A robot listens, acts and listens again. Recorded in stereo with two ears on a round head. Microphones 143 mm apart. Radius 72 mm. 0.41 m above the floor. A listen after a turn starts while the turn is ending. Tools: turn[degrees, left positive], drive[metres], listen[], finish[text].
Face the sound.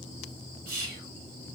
Thought: The whispering: about 55° right or 125° right.
Action: turn[-55]
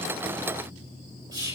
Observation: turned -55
Thought: So it is at 30° right.
Action: turn[-30]
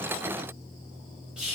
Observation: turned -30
Action: finish[Facing the whispering.]